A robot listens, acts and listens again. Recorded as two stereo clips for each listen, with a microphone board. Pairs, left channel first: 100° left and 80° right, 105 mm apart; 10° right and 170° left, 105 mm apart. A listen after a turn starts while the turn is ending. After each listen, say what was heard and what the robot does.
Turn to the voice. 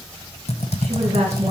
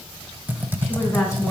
The woman speaking: 70° right. Turn 70° right.
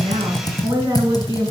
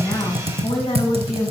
The woman speaking is now 20° right. Turn 20° right.
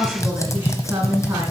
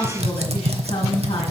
The woman speaking is now 10° right. Turn 10° right.
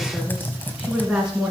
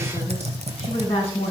Found it: a woman speaking, straight ahead, 2 to 4 m away.